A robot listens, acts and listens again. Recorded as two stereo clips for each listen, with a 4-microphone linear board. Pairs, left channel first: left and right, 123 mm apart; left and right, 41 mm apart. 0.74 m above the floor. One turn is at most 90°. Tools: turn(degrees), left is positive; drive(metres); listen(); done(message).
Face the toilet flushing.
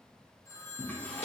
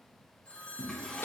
turn(degrees=30)
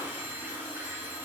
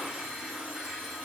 turn(degrees=-15)
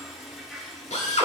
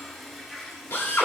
done("Found it: a toilet flushing, straight ahead.")